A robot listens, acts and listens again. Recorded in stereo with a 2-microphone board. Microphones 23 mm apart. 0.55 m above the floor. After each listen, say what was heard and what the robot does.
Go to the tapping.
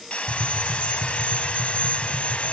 The tapping: about 60° left or 120° left. Turn 60° left.
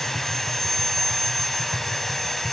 So it is at 60° left. Turn 60° left.
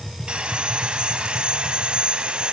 Drive 1.0 m forward.
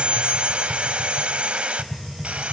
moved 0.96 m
Drive 1.0 m forward.
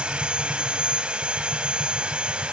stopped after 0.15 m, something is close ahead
Keep listening.
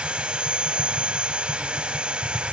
The tapping is now 10° right. Turn 10° right.
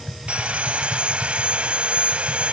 Something is in my way. I am facing the tapping but have not reached it.